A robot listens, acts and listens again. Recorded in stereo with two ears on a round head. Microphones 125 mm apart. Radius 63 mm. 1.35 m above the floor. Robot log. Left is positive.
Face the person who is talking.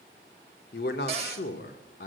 note: The man speaking: about 70° left or 110° left.
cmd yaw +70
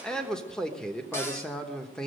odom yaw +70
end: Found it: a man speaking, straight ahead, 1 to 2 m away.